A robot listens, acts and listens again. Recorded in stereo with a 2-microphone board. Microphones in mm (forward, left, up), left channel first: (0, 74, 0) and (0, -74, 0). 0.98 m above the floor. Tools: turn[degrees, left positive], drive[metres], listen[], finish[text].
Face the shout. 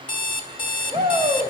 Thought: The shout: about 30° right or 150° right.
Action: turn[-30]
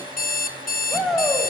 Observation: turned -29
Action: finish[Found it: a shout, straight ahead.]